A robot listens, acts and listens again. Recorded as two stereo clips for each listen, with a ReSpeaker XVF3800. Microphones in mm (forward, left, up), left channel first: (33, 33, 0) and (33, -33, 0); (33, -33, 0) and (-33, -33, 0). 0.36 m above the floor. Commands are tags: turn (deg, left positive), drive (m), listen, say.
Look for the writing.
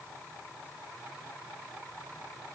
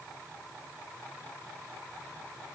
<listen/>
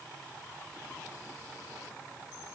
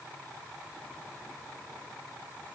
<listen/>
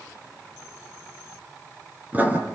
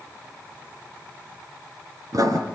<turn deg="-155"/>
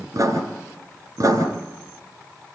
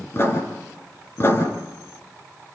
<turn deg="-55"/>
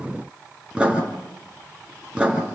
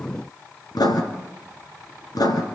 <turn deg="-15"/>
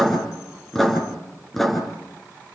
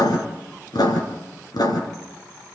<say>Found it: writing, straight ahead.</say>